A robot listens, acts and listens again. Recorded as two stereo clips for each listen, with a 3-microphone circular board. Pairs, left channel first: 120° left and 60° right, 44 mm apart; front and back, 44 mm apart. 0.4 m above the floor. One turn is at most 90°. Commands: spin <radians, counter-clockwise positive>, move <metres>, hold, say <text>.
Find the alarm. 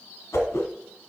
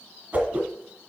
hold
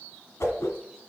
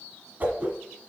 hold
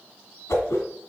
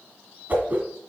say I can't make out an alarm, only a whoosh.